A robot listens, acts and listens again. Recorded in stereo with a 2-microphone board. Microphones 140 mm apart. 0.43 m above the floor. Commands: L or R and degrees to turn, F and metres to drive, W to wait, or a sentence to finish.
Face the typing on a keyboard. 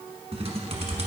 R50
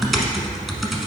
Facing the typing on a keyboard, 1 to 2 m away.